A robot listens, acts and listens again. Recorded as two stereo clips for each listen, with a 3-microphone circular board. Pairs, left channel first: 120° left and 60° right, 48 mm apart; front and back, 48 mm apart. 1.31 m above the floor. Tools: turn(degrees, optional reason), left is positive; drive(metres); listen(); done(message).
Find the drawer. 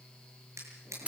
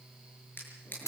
turn(degrees=-50, reason="The drawer: 50° right.")
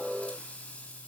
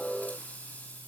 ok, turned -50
listen()
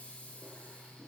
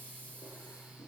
listen()
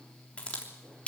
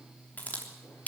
done("I heard a drawer from this way, but can't make it out now.")